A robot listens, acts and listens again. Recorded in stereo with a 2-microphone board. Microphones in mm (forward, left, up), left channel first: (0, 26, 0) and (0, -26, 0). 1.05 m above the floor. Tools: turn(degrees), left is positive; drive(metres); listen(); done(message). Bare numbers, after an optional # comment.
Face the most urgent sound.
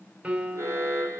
# The alarm: about 70° right or 110° right.
turn(-70)
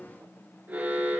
# So it is at 35° right.
turn(-35)
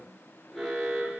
done("Found it: an alarm, straight ahead.")